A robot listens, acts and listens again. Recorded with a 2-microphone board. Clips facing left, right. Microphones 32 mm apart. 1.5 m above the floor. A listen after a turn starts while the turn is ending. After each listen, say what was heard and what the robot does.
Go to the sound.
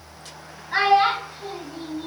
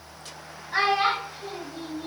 The child speaking: about 70° left or 110° left. Turn 70° left.
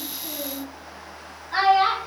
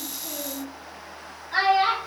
So it is at 10° left. Turn 10° left.
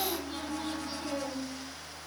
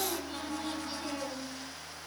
Keep listening.
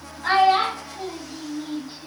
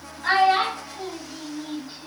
Drive 1.0 m forward.
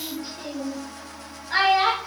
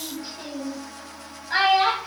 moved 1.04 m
Drive 1.0 m forward.
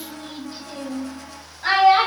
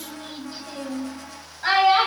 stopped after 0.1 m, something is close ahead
Arrived at the child speaking, straight ahead.